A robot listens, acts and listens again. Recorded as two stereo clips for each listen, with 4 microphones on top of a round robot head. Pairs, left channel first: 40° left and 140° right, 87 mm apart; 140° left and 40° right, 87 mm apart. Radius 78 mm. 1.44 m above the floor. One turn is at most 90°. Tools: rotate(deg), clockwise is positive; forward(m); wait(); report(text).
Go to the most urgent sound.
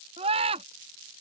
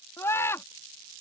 rotate(90)
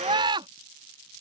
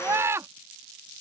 rotate(90)
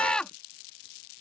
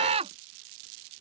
rotate(45)
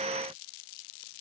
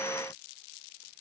wait()
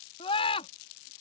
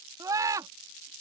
rotate(-15)
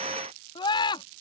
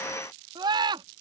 forward(1.0)
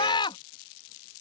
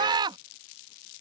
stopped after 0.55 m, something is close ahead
report("Something is in my way. I am facing the scream but have not reached it.")